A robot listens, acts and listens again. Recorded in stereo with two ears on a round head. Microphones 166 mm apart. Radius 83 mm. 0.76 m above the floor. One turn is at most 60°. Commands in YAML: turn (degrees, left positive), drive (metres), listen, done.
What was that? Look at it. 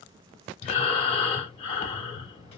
turn: 30
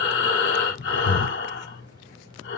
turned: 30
turn: 60
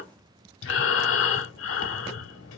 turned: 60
turn: 60
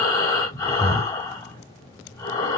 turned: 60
turn: 20
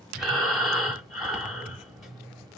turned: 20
done: "Found it: breathing, straight ahead, under 1 m away."